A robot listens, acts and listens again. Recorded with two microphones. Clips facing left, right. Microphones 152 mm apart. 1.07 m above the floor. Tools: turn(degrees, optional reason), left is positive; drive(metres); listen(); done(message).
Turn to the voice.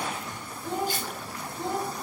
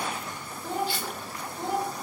turn(degrees=-30, reason="The child speaking: about 30° right or 150° right.")
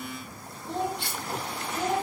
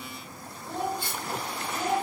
done("Facing the child speaking.")